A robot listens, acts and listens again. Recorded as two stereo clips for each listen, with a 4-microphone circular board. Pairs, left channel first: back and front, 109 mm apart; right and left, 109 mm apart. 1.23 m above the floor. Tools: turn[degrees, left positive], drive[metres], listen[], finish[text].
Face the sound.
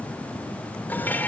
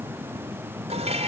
Thought: The dishes clattering: 105° left.
Action: turn[105]
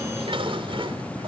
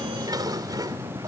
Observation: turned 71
Thought: The dishes clattering is now 35° left.
Action: turn[35]
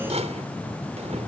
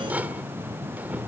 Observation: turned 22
Thought: The dishes clattering is now 15° left.
Action: turn[15]
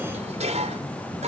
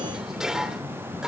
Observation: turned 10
Action: finish[Found it: dishes clattering, straight ahead.]